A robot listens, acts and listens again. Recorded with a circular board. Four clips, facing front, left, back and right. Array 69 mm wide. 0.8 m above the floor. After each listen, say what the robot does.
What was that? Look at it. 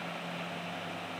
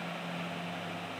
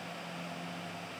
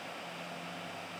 Keep listening.
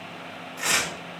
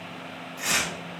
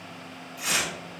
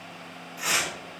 Found it: tearing paper, straight ahead.